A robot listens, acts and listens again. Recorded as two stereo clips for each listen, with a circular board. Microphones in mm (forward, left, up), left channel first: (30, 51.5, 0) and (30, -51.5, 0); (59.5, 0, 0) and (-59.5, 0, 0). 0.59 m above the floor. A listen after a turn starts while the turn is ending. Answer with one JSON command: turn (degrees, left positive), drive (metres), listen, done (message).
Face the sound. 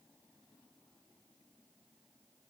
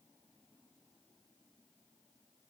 {"listen": true}
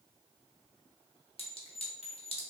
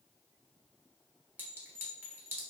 {"turn": 105}
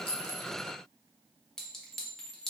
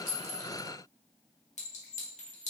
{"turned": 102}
{"done": "Found it: a clink, straight ahead, under 1 m away."}